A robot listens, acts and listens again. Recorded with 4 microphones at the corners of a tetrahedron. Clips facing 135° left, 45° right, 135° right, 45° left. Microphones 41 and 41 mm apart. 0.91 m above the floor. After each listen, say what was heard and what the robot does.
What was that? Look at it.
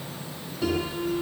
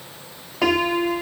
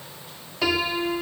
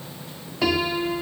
The piano: 45° right. Turn 45° right.
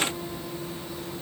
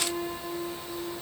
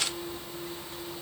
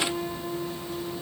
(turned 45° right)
The piano is now 15° left. Turn 15° left.
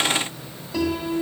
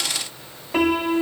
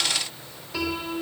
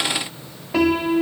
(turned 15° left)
Found it: a piano, straight ahead.